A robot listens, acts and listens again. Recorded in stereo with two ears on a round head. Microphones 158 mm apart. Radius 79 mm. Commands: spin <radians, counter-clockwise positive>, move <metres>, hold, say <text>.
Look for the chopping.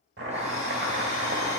spin -1.13
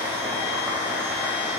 say Facing the chopping, 1 to 2 m away.